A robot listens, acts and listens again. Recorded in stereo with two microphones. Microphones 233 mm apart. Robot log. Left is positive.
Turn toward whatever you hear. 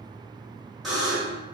cmd yaw +30
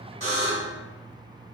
note: So it is at 150° left.
cmd yaw +150
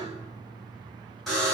end: Facing the buzzer, 1 to 2 m away.